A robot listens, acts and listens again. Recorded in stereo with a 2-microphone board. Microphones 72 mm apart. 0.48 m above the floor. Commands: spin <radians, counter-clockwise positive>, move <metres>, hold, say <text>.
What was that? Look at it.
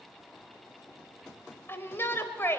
spin 0.52
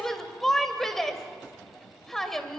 say Found it: a shout, straight ahead, 1 to 2 m away.